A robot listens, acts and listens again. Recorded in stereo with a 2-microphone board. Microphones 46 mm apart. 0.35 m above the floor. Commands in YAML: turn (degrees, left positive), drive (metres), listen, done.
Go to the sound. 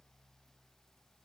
listen: true
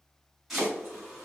turn: -30
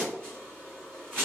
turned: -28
turn: 20
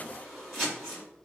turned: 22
drive: 1.0
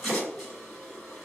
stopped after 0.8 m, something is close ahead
done: "I am next to the chopping."